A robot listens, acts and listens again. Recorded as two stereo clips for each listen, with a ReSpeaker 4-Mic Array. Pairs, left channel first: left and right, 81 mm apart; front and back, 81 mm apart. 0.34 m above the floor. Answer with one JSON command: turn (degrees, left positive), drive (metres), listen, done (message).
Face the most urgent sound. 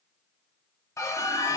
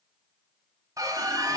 {"turn": 135}
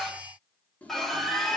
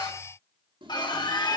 {"done": "Found it: a scream, straight ahead."}